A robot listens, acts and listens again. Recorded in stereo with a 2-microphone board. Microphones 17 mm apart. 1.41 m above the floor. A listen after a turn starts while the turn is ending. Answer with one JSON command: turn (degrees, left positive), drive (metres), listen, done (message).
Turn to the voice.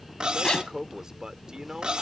{"turn": -50}
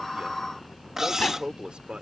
{"turn": -80}
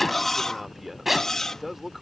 {"turn": -15}
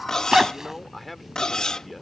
{"done": "Facing the man speaking."}